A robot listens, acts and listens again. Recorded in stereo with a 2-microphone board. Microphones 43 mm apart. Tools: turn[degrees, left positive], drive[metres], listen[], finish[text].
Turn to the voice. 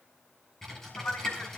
Thought: The man speaking: about 55° left or 125° left.
Action: turn[55]
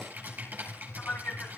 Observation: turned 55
Thought: So it is at 65° left.
Action: turn[65]
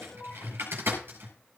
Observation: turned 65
Thought: The man speaking is now 45° left.
Action: turn[45]
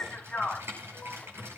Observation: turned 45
Thought: The man speaking is now 15° left.
Action: turn[15]
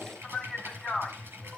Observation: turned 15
Action: finish[Facing the man speaking.]